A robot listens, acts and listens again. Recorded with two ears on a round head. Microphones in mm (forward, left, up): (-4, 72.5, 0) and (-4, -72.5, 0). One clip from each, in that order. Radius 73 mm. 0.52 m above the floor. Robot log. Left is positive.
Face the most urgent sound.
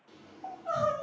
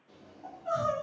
note: The crying: about 25° right or 155° right.
cmd yaw -25
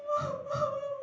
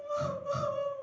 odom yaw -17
note: So it is at 140° right.
cmd yaw -140
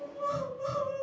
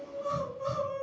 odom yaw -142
note: The crying is now 10° left.
cmd yaw +10
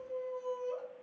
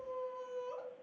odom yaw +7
end: Facing the crying.